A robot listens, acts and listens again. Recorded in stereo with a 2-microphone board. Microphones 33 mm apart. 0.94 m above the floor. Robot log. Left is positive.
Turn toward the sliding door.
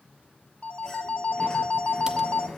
note: The sliding door: about 20° left or 160° left.
cmd yaw +20
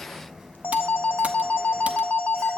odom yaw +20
end: Found it: a sliding door, straight ahead.